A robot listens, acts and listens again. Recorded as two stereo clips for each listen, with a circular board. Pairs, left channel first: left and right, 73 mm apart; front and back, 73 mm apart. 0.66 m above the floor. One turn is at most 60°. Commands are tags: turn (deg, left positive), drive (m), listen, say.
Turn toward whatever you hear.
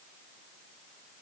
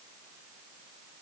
<listen/>
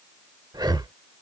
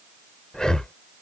<turn deg="-60"/>
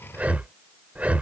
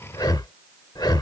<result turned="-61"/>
<turn deg="-20"/>
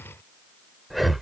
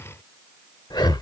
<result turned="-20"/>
<say>Facing the breathing.</say>